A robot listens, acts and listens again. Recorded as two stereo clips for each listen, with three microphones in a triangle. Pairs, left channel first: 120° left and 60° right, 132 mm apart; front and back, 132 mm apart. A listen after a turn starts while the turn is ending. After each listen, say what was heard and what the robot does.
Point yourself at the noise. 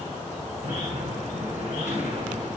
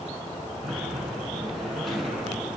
The sliding door: 90° right. Turn 90° right.
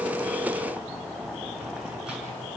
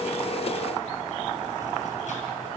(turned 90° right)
Keep listening.
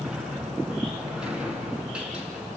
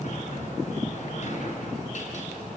The sliding door is now 20° left. Turn 20° left.
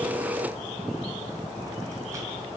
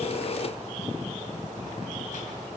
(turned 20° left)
Keep listening.
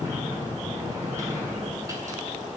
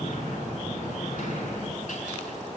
Found it: a sliding door, straight ahead.